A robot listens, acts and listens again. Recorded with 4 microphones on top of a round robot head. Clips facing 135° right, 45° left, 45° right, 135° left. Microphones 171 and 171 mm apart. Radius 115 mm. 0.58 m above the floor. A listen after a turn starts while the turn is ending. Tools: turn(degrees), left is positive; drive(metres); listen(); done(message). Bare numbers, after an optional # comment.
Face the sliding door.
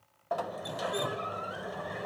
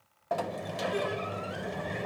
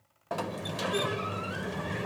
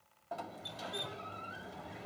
# The sliding door: 30° right.
turn(-30)
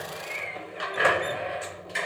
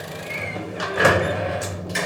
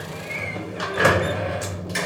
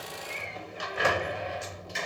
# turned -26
done("Found it: a sliding door, straight ahead.")